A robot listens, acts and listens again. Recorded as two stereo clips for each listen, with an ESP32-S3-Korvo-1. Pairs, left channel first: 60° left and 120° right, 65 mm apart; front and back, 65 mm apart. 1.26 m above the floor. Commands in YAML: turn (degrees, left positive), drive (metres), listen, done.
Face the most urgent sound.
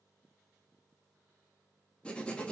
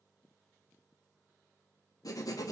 listen: true
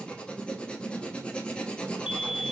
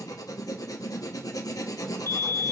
turn: 160
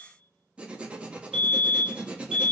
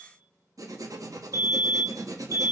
turn: -20
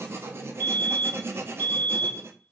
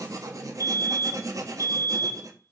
done: "Found it: a fire alarm, straight ahead, 1 to 2 m away."